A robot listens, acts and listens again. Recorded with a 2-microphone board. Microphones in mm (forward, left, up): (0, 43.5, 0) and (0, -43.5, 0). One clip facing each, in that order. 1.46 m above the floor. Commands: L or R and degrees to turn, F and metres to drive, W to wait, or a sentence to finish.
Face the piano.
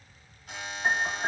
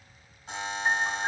L70
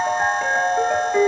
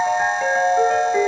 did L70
Found it: a piano, straight ahead.